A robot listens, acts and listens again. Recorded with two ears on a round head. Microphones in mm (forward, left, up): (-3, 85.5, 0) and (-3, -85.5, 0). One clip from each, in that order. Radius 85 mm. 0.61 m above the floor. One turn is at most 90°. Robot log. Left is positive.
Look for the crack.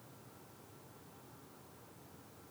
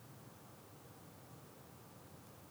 cmd idle
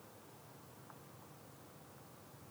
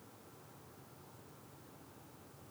cmd idle
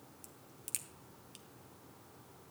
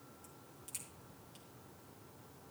note: The crack: about 35° left or 145° left.
cmd yaw +35
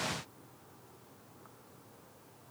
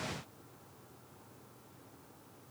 cmd idle
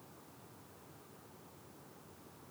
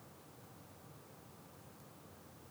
end: I heard a crack, but can't make it out now. It was about straight ahead or 110° left.